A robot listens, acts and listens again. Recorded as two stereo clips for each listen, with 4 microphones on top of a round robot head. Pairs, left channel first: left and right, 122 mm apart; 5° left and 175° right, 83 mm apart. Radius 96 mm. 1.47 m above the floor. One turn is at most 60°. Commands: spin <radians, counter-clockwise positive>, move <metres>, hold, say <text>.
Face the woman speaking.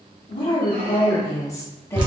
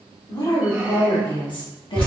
spin 0.35
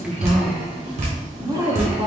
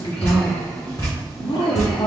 spin -0.70
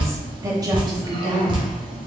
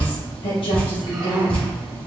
spin -0.70
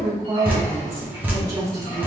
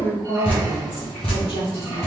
spin -0.44
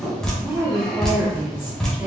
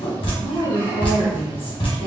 say Facing the woman speaking, 1 to 2 m away.